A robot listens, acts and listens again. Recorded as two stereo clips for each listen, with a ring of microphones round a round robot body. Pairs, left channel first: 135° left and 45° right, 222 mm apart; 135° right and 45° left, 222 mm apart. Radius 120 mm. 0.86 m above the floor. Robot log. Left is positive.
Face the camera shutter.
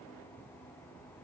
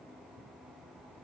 cmd idle
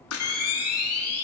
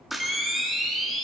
note: The camera shutter: 135° left.
cmd yaw +135
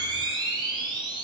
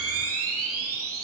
note: The camera shutter is now 25° left.
cmd yaw +25
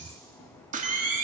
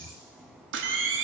note: The camera shutter is now 10° left.
cmd yaw +10
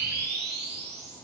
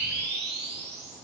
end: Found it: a camera shutter, straight ahead.